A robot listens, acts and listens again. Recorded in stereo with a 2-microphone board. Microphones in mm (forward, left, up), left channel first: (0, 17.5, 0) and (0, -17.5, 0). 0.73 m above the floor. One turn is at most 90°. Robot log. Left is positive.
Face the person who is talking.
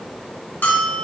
cmd idle
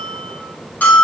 cmd idle
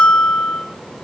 end: I can't make out anyone speaking, only a bell.